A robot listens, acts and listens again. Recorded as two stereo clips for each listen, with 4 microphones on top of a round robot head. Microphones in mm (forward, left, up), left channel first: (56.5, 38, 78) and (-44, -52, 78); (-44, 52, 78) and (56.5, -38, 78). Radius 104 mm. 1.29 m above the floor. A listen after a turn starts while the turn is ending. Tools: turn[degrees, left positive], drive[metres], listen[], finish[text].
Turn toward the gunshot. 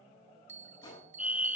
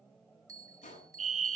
Thought: The gunshot: 100° left.
Action: turn[100]
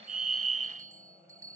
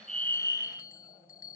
Action: finish[Facing where the gunshot came from. I can't hear it now.]